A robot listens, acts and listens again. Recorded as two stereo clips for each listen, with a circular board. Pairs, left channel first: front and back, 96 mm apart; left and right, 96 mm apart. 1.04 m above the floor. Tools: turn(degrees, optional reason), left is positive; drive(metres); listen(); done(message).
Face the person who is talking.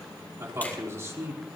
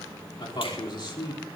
turn(degrees=120, reason="The man speaking: 120° left.")
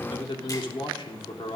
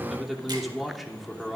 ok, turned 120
done("Facing the man speaking, 2 to 4 m away.")